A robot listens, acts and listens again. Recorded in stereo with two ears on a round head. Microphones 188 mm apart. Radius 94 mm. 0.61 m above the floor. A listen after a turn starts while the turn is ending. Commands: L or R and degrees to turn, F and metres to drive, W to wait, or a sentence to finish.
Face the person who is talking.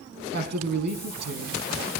R50
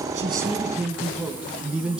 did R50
Found it: a man speaking, straight ahead, over 4 m away.